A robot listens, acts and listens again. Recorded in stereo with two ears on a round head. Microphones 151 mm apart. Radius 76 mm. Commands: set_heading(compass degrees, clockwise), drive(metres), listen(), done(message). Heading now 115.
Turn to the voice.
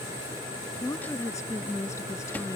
set_heading(95)
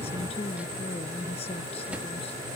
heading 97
set_heading(317)
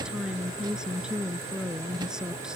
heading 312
done("Facing the woman speaking.")